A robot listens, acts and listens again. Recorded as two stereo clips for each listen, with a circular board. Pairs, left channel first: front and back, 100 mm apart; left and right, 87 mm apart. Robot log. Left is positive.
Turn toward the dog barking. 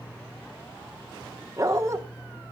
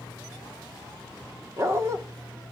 note: The dog barking: 130° right.
cmd yaw -130
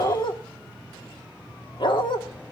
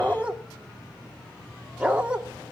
note: The dog barking is now 15° right.
cmd yaw -15
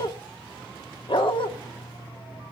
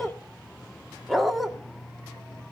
end: Facing the dog barking.